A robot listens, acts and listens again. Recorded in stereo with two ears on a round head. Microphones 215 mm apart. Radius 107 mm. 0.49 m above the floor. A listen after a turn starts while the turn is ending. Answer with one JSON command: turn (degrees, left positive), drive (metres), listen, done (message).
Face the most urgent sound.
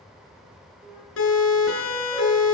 {"turn": 60}
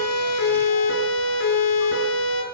{"turn": 55}
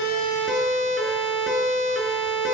{"done": "Found it: a siren, straight ahead."}